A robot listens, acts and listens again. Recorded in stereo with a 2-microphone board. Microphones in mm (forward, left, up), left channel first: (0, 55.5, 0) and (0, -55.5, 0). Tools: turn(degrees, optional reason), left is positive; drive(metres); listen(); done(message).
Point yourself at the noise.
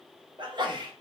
turn(degrees=-45, reason="The sneeze: about 45° right or 135° right.")
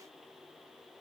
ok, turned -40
listen()
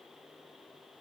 done("I heard a sneeze, but can't make it out now. It was about 5° right or 95° right.")